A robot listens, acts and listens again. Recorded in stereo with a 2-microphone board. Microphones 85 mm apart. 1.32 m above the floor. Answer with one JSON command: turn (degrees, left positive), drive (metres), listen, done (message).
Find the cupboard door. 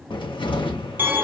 {"turn": 90}
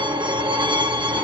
{"listen": true}
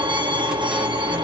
{"listen": true}
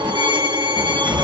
{"turn": -10}
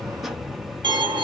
{"done": "Found it: a cupboard door, straight ahead, under 1 m away."}